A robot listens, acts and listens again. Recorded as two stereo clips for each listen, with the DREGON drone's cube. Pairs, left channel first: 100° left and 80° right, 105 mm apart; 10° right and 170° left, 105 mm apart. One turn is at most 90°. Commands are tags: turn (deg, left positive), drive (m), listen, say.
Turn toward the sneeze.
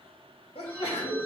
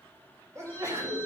<turn deg="90"/>
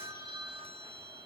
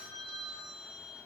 <turn deg="20"/>
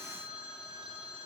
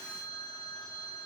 <say>I heard a sneeze from this way, but can't make it out now.</say>